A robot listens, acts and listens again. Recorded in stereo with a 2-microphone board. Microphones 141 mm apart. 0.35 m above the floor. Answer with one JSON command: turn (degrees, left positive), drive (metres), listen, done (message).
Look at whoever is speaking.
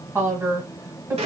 {"turn": -20}
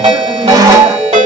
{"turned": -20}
{"listen": true}
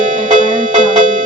{"listen": true}
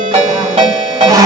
{"done": "I heard a woman speaking, but can't make it out now. It was about straight ahead or 140° right."}